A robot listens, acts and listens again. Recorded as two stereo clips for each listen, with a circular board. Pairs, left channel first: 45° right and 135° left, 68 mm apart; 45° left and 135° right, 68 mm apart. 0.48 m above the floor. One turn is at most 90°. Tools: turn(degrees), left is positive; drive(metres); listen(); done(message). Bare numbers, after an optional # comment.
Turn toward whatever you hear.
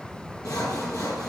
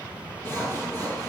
# The sawing: 10° right.
turn(-10)
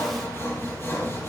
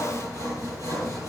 done("Facing the sawing.")